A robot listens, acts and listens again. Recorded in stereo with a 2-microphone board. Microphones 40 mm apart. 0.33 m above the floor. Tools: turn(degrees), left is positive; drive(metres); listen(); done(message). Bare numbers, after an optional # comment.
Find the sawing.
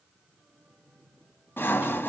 # The sawing: about 65° left or 115° left.
turn(65)
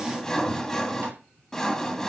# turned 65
# So it is at 10° left.
turn(10)
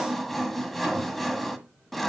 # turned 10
done("Facing the sawing, 1 to 2 m away.")